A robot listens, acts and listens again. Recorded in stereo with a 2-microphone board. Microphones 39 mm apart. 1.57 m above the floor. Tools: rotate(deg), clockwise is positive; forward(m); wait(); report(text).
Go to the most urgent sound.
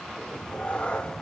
wait()
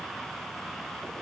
wait()
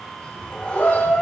rotate(-90)
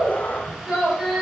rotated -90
rotate(10)
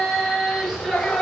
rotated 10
forward(1.0)
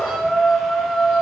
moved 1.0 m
forward(1.0)
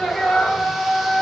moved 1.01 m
forward(1.0)
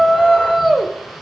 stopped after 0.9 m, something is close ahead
report("Arrived at the shout, straight ahead.")